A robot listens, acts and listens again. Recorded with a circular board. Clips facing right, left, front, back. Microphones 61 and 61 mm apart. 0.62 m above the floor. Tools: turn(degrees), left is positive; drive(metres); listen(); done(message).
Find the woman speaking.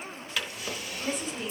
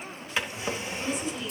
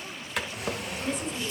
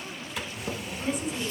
turn(degrees=-100)
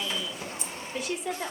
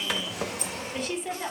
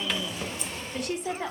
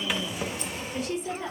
done("Found it: a woman speaking, straight ahead, 2 to 4 m away.")